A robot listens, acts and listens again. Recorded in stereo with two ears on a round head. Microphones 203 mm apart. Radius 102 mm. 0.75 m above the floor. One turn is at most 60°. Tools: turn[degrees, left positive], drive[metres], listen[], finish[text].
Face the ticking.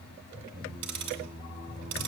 Action: turn[-60]
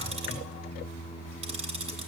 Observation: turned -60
Thought: So it is at 25° right.
Action: turn[-25]
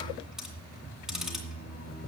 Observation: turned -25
Action: finish[Found it: ticking, straight ahead, 2 to 4 m away.]